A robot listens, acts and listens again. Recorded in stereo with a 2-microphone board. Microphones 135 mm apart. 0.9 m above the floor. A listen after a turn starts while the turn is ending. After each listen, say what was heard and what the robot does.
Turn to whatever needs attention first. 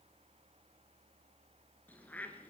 Keep listening.
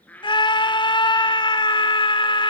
The scream: about 35° left or 145° left. Turn 35° left.
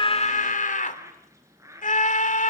So it is at 110° left. Turn 110° left.
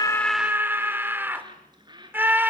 The scream is now 15° right. Turn 15° right.
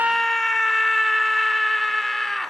Found it: a scream, straight ahead.